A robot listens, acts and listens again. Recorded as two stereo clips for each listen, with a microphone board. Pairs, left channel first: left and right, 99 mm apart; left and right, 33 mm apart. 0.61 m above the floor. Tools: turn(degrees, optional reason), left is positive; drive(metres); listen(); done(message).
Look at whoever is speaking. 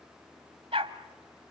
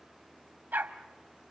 listen()
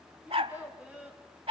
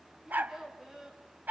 turn(degrees=-30)
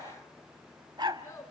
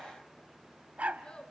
turn(degrees=25, reason="So it is at 25° left.")
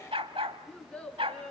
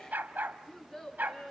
done("Facing the child speaking.")